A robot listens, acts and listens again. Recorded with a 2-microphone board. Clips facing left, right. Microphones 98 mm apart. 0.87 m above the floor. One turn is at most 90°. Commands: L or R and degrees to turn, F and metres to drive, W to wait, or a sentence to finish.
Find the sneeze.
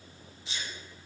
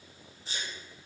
R35
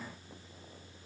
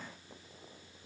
W
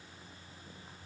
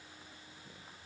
I heard a sneeze, but can't make it out now. It was about straight ahead or 110° right.